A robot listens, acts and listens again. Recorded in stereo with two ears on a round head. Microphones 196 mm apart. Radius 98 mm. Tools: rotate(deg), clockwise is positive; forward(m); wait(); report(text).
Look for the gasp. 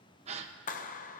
rotate(30)
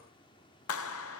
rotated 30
wait()
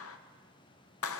report("I heard a gasp, but can't make it out now. It was about straight ahead or 120° right.")